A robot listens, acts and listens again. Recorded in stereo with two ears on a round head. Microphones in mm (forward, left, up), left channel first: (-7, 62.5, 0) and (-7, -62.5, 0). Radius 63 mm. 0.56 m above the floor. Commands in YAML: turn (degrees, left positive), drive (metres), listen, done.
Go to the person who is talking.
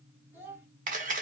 turn: -15
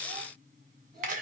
listen: true
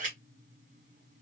listen: true
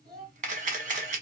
turn: -150
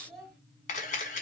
drive: 1.0
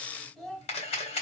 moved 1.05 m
drive: 1.0
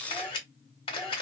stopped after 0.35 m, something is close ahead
listen: true
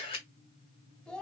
done: "Arrived at the child speaking, straight ahead."